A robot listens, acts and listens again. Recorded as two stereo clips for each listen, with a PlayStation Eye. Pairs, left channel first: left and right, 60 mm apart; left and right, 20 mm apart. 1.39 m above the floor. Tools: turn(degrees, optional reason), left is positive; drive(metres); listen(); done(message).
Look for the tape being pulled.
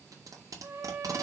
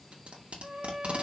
turn(degrees=-70, reason="The tape being pulled: about 70° right or 110° right.")
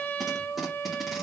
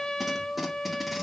listen()
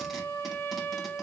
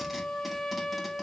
listen()
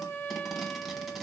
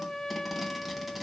done("Facing the tape being pulled, 2 to 4 m away.")